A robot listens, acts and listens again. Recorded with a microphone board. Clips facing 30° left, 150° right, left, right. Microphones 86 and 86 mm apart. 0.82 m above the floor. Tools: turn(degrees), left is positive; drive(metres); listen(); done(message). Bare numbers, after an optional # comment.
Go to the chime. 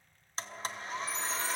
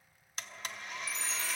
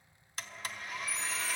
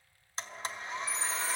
# The chime: 95° right.
turn(-95)
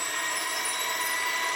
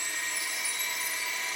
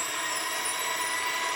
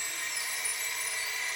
listen()
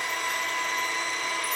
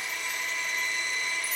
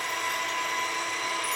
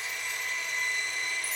listen()
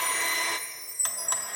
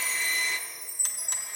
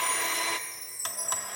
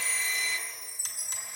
drive(1.0)
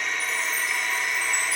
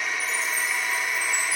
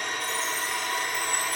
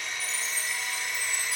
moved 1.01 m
listen()
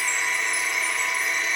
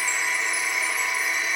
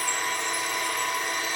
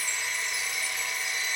listen()
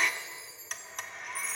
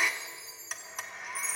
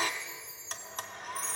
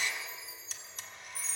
# The chime is now 10° right.
turn(-10)
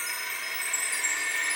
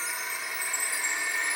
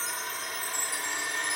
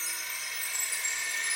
drive(1.0)
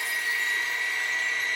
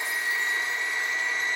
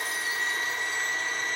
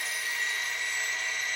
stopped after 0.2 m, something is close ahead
listen()
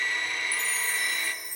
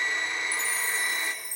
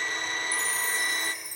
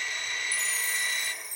done("Something is in my way. I am facing the chime but have not reached it.")